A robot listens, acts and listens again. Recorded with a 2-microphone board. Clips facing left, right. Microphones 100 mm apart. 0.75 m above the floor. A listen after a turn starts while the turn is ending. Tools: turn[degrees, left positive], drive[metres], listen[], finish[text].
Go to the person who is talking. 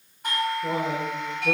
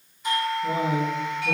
Thought: The man speaking: about 70° left or 110° left.
Action: turn[70]
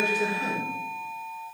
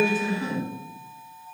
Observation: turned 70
Thought: So it is at 35° left.
Action: turn[35]
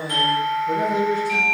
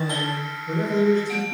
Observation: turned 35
Thought: The man speaking is now 10° left.
Action: turn[10]
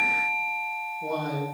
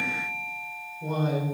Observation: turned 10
Action: drive[1.0]
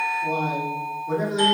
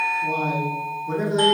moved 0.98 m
Action: drive[1.0]
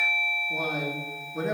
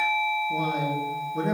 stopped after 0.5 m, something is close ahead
Action: finish[Arrived at the man speaking, straight ahead.]